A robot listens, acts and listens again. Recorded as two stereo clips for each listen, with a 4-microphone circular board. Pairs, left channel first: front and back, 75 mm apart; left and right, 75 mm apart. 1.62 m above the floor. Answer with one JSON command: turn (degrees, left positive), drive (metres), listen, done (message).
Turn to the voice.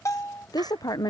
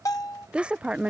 {"turn": -15}
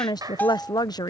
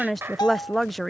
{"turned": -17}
{"done": "Facing the woman speaking."}